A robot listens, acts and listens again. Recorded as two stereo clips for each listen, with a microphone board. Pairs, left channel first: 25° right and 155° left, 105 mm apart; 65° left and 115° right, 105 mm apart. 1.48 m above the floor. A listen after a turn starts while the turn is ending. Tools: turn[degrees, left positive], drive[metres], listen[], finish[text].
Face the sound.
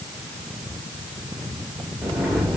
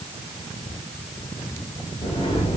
Thought: The sliding door: 75° left.
Action: turn[75]
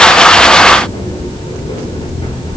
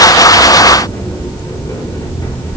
Action: finish[Facing the sliding door.]